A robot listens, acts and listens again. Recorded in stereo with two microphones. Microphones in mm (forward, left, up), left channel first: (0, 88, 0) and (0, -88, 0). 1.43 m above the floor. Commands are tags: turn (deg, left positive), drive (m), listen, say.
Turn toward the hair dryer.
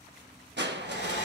<turn deg="90"/>
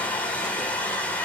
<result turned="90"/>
<turn deg="10"/>
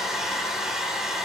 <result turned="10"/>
<say>Facing the hair dryer.</say>